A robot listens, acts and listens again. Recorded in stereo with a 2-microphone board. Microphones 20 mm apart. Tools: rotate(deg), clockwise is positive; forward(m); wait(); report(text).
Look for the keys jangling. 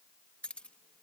rotate(-70)
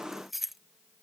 report("Found it: keys jangling, straight ahead.")